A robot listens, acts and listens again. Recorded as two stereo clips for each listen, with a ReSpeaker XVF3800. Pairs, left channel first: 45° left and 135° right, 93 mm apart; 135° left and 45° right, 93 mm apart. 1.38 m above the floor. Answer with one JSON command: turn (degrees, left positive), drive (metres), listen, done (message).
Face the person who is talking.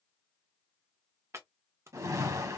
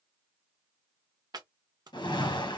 {"listen": true}
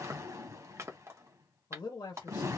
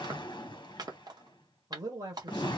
{"done": "Facing the man speaking, 1 to 2 m away."}